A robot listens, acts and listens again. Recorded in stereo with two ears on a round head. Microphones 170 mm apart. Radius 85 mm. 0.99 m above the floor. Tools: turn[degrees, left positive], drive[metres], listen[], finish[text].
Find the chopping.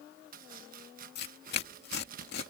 Thought: The chopping: about 50° right or 130° right.
Action: turn[-50]
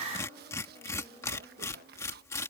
Thought: So it is at 70° right.
Action: turn[-70]
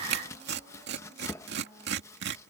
Thought: The chopping is now 15° left.
Action: turn[15]
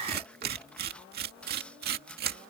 Action: finish[Facing the chopping.]